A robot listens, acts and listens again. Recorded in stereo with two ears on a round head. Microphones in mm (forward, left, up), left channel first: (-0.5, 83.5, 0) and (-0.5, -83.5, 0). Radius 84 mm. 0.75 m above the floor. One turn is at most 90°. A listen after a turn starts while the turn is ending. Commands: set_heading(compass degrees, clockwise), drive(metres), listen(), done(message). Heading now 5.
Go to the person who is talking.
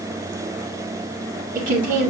set_heading(50)
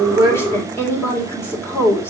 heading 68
set_heading(53)
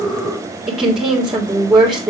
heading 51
drive(1.0)
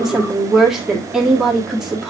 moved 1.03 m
drive(1.0)
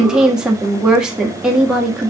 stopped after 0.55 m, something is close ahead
done("I am next to the woman speaking.")